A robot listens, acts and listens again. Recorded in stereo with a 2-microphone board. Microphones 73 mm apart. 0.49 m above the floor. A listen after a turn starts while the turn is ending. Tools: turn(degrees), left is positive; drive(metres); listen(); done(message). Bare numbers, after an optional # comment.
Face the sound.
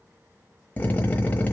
# The drill: about 25° left or 155° left.
turn(25)
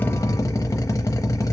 # So it is at 130° left.
turn(130)
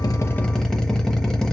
done("Found it: a drill, straight ahead.")